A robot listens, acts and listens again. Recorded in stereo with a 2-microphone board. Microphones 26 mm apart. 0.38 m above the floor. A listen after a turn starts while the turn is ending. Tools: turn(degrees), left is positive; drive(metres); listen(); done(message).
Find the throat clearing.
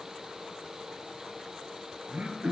turn(degrees=-55)
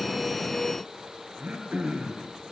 turn(degrees=-65)
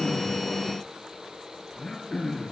turn(degrees=15)
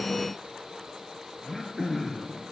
done("Facing the throat clearing, 1 to 2 m away.")